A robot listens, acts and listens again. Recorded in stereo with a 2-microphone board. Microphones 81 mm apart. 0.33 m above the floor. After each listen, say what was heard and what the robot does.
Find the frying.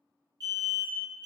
Keep listening.
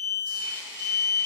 The frying: about 15° right or 165° right. Turn 15° right.
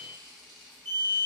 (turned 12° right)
Found it: frying, straight ahead, under 1 m away.